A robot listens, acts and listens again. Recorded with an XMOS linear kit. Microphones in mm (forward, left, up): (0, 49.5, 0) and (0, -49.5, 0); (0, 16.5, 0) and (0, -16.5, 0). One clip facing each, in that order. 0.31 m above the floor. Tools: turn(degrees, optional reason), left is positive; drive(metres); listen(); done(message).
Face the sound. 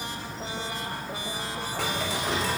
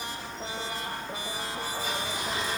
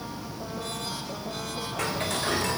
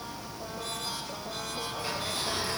turn(degrees=90)
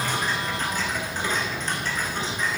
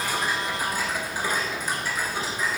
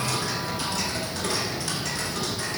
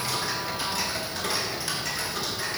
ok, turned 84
turn(degrees=-10, reason="So it is at 10° right.")
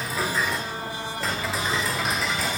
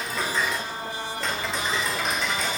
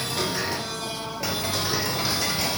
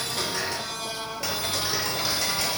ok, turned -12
done("Found it: ticking, straight ahead.")